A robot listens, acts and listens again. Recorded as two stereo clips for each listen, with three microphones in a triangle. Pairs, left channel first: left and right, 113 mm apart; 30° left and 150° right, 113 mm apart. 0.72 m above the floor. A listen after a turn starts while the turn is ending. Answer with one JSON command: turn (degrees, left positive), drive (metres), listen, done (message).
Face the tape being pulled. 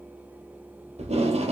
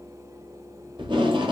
{"turn": -105}
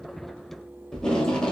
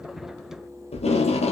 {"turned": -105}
{"done": "Facing the tape being pulled, 1 to 2 m away."}